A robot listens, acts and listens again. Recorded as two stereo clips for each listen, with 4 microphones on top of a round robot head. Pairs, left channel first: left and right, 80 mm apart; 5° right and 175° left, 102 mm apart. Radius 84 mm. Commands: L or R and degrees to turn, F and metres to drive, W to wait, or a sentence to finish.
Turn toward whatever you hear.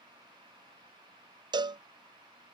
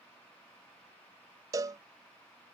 R120
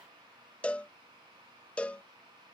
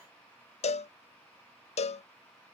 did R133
L10
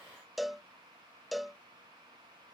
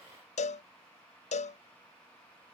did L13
Facing the cowbell.